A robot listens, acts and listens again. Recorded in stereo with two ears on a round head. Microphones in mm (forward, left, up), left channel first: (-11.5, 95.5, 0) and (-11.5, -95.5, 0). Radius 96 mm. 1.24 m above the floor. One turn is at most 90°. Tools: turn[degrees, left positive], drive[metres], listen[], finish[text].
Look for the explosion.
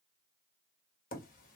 Action: listen[]
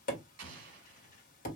Thought: The explosion: about 60° right or 120° right.
Action: turn[-60]
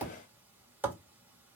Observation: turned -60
Action: listen[]
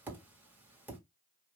Action: finish[I heard an explosion, but can't make it out now. It was about straight ahead or 60° right.]